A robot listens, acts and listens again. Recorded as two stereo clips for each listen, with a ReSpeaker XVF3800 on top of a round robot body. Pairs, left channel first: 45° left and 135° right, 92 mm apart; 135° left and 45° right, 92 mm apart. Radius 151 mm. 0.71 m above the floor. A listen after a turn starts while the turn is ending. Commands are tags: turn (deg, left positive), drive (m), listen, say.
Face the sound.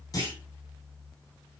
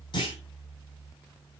<turn deg="95"/>
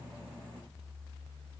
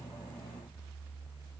<say>I heard a clunk from this way, but can't make it out now.</say>